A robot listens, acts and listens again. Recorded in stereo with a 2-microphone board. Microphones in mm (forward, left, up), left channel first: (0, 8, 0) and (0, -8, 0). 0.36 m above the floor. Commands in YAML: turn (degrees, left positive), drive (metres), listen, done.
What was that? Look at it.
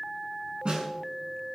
turn: -70
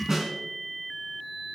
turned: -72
turn: -30
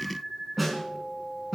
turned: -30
done: "Facing the snare drum."